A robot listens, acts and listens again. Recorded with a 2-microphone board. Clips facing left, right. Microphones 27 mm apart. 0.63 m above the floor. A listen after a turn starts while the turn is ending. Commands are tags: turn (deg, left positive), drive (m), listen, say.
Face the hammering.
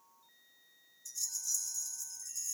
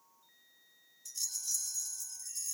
<listen/>
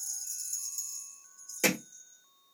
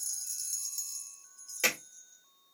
<turn deg="-20"/>
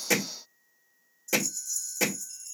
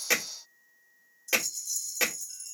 <turn deg="-135"/>
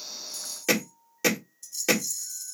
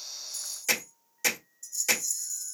<turn deg="25"/>
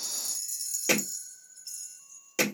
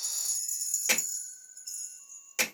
<say>Found it: hammering, straight ahead, 1 to 2 m away.</say>